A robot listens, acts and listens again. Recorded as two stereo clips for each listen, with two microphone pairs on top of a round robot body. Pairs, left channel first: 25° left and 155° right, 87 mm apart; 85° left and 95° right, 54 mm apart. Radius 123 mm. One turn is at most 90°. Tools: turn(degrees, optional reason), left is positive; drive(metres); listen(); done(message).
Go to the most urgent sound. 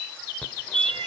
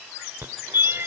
turn(degrees=-55, reason="The fire alarm: 55° right.")
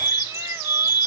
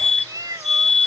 drive(metres=1.0)
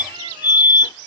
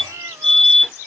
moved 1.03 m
drive(metres=1.0)
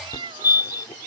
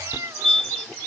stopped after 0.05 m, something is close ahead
done("Blocked. The fire alarm is further on, straight ahead.")